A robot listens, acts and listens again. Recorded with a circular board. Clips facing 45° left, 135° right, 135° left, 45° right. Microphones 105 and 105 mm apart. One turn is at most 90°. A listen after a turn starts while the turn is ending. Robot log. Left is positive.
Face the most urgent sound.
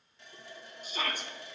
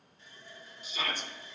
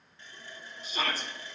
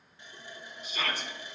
note: The shout: 85° left.
cmd yaw +85
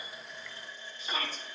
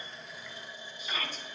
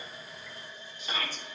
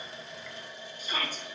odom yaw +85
note: The shout is now 10° right.
cmd yaw -10
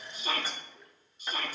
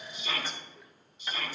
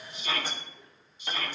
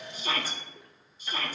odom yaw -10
end: Facing the shout.